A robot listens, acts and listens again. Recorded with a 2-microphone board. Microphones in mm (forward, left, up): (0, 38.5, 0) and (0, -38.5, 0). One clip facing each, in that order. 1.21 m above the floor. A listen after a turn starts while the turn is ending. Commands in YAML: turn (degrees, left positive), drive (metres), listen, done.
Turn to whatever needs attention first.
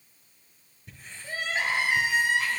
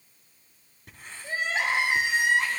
turn: -20
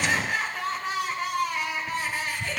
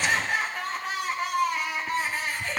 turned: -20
done: "Found it: crying, straight ahead."